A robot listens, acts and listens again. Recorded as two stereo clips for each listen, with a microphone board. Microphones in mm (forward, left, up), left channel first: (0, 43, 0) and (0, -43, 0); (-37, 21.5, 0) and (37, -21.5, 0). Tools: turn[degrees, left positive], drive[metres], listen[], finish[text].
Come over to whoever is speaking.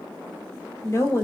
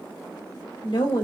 Thought: The woman speaking: 140° left.
Action: turn[140]
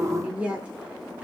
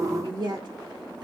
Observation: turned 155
Thought: The woman speaking is now 15° right.
Action: turn[-15]
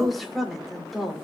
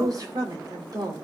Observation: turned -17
Action: drive[1.0]
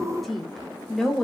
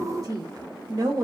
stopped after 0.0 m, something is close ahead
Action: finish[Blocked. The woman speaking is further on, straight ahead.]